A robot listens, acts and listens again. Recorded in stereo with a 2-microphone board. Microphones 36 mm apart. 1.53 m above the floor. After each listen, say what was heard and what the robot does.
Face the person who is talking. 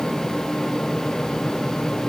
Keep listening.
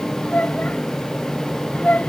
The child speaking: about 55° left or 125° left. Turn 55° left.
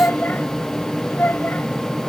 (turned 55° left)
So it is at 75° left. Turn 75° left.
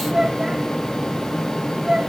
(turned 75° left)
The child speaking is now 25° right. Turn 25° right.
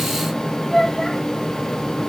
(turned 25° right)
The child speaking is now 10° left. Turn 10° left.
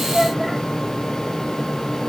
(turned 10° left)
Keep listening.
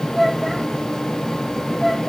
Facing the child speaking.